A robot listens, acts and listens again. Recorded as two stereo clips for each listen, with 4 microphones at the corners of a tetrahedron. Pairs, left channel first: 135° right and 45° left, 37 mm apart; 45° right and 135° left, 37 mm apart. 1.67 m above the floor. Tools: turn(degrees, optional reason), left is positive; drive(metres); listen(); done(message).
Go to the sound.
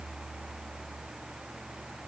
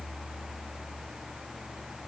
listen()
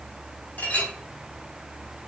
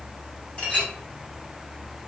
turn(degrees=-105, reason="The clink: 105° right.")
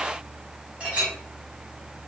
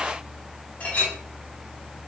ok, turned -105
turn(degrees=-15, reason="The clink is now 15° right.")
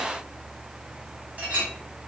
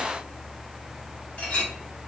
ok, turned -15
drive(metres=1.0)
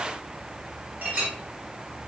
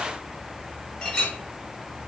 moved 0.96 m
turn(degrees=15, reason="The clink is now 15° left.")
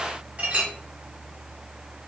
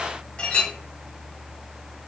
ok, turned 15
drive(metres=1.0)
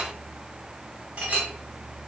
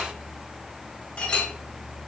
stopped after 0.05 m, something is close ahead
done("Arrived at the clink, straight ahead.")